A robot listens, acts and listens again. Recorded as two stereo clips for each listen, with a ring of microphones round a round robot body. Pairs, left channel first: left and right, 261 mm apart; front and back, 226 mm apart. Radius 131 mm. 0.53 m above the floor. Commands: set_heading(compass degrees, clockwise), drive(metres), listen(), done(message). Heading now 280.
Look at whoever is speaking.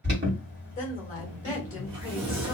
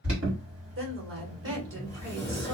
set_heading(125)
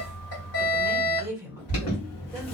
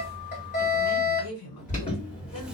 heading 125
set_heading(135)
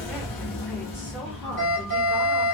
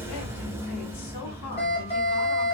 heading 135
listen()
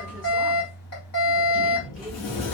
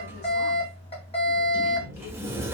listen()
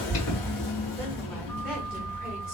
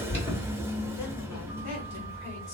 done("I heard a woman speaking from this way, but can't make it out now.")